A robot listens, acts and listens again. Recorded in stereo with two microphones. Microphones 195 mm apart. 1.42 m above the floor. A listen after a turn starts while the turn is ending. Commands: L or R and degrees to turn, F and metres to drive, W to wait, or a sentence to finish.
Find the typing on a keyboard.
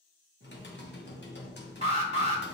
L65
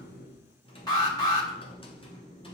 L30
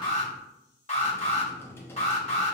L15
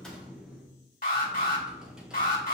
Facing the typing on a keyboard, under 1 m away.